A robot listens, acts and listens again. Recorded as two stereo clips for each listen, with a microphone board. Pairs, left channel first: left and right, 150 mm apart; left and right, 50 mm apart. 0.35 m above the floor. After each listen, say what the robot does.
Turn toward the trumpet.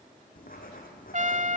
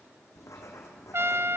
Turn 60° right.
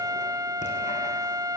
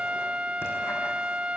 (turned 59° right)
Turn 30° right.
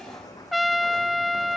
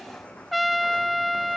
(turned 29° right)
Facing the trumpet.